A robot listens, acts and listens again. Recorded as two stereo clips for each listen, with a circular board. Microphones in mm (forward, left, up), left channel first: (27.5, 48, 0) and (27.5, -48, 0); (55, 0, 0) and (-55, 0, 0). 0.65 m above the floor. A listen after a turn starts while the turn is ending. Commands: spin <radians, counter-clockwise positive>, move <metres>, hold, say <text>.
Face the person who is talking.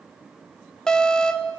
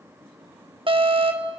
hold
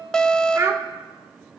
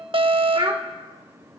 spin -2.53
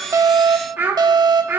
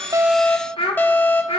spin -0.35
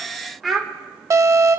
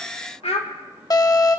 say Found it: a child speaking, straight ahead, 1 to 2 m away.